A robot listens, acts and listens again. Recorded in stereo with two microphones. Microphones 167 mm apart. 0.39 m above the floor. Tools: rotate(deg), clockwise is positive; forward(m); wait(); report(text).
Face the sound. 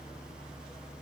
wait()
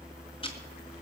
rotate(-35)
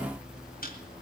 rotate(-105)
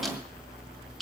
report("Found it: ticking, straight ahead, 2 to 4 m away.")